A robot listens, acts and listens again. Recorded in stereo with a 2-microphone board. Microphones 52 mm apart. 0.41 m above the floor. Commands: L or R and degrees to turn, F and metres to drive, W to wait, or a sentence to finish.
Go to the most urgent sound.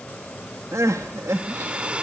R90
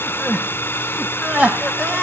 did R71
R30
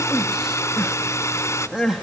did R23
F1.0
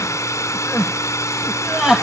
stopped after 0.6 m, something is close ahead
R10
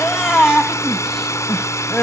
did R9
Blocked. The crying is further on, straight ahead.